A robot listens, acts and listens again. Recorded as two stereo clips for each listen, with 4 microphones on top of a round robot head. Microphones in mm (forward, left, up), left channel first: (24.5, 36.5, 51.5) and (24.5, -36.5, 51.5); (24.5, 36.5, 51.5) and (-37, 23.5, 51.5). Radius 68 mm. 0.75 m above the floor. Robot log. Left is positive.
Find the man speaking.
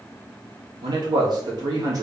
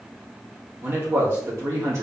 note: The man speaking: 125° right.
cmd yaw -125
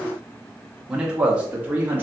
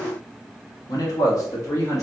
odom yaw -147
note: The man speaking is now 25° right.
cmd yaw -25
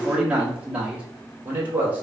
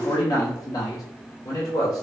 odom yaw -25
note: The man speaking is now 25° right.
cmd yaw -25
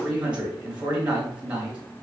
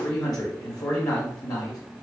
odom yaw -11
note: The man speaking is now 15° right.
cmd yaw -15
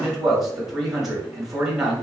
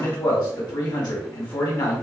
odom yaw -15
end: Facing the man speaking.